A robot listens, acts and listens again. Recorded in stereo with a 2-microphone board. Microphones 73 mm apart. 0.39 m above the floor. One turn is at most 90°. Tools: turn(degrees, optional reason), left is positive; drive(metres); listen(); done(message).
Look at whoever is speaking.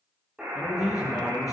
turn(degrees=50, reason="The man speaking: about 50° left or 130° left.")
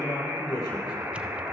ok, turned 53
turn(degrees=80, reason="So it is at 80° left.")
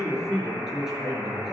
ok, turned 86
done("Facing the man speaking.")